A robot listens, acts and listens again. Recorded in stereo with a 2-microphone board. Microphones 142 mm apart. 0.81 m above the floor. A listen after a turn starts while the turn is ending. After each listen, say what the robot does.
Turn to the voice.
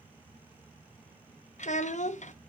Turn 55° left.
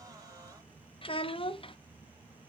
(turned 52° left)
Turn 50° left.
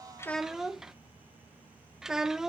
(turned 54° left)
Found it: a child speaking, straight ahead.